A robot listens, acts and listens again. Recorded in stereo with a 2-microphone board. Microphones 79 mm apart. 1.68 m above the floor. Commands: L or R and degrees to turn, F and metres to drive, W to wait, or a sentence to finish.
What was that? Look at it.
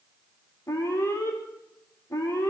L40
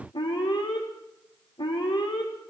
L100
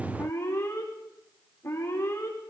L30
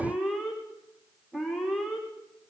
Facing the alarm.